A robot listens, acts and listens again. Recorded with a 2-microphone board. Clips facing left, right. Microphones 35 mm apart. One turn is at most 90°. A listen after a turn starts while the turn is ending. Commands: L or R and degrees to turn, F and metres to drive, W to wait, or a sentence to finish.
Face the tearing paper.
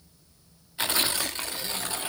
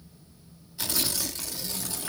L40
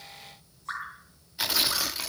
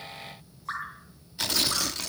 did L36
L10
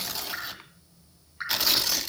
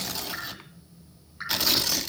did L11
Found it: tearing paper, straight ahead, under 1 m away.